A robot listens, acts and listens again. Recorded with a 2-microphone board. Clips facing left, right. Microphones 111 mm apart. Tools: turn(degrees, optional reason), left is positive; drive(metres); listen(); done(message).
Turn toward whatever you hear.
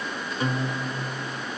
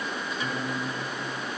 turn(degrees=50, reason="The guitar: about 50° left or 130° left.")
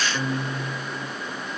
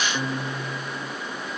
done("Facing the guitar.")